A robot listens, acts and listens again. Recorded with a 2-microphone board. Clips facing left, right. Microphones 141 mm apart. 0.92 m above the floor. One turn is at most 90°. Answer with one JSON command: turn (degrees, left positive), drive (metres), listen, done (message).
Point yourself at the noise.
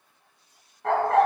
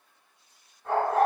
{"turn": 70}
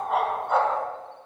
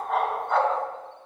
{"done": "Facing the dog barking."}